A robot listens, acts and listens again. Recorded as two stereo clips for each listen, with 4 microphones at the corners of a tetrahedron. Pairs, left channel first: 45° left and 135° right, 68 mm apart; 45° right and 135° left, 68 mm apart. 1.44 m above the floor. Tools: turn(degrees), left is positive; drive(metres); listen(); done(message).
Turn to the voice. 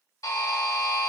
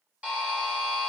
listen()
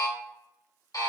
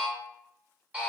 listen()
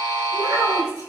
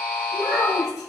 turn(degrees=-145)
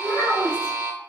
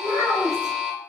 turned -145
done("Facing the child speaking.")